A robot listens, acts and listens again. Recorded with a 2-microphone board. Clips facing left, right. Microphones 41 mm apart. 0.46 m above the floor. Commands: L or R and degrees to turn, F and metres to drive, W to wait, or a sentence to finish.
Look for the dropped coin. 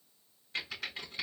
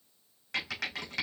W
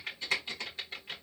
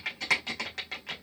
W
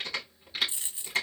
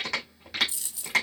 L30
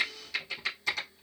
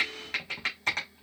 W
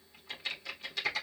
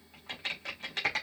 I heard a dropped coin, but can't make it out now. It was about straight ahead or 120° left.